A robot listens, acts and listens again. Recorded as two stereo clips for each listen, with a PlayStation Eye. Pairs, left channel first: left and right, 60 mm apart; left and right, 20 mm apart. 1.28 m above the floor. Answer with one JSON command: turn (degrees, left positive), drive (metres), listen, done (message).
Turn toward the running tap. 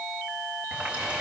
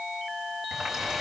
{"turn": -20}
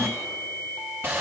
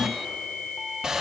{"turn": -145}
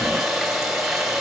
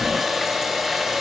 {"done": "Found it: a running tap, straight ahead."}